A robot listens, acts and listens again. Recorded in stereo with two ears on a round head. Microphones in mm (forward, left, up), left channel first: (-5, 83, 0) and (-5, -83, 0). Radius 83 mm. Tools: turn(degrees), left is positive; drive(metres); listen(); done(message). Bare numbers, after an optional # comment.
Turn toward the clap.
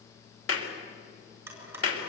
turn(90)
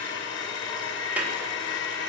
# So it is at 10° right.
turn(-10)
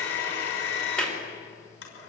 done("Found it: a clap, straight ahead, over 4 m away.")